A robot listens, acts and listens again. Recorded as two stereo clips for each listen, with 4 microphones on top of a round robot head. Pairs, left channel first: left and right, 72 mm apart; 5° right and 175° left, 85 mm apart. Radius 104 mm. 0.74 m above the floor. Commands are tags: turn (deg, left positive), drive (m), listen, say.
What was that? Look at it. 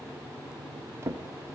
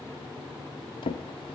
<turn deg="-30"/>
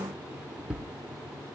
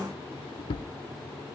<turn deg="-10"/>
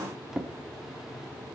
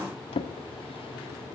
<say>Found it: a drawer, straight ahead.</say>